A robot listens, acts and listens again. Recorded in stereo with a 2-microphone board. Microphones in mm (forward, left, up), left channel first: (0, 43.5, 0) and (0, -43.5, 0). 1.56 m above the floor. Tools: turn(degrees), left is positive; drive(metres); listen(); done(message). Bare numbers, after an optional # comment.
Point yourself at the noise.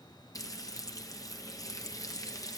# The frying: about 40° left or 140° left.
turn(40)
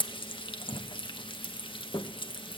# So it is at 95° left.
turn(95)
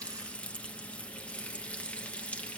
# The frying is now 15° left.
turn(15)
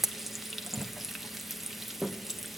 done("Facing the frying.")